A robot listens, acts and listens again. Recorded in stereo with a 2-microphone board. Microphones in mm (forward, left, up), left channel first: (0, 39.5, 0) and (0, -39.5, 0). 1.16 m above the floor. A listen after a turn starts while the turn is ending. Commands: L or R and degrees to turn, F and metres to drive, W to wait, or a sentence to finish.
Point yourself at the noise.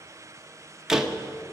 R30
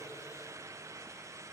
W
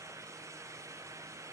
I heard a door slam, but can't make it out now. It was about 25° left or 145° right.